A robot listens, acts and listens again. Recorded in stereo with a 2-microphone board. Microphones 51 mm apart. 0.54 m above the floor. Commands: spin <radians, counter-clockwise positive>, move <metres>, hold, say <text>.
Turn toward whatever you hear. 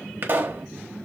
spin -0.79
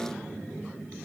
hold
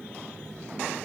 say I heard a pop, but can't make it out now. It was about straight ahead or 90° right.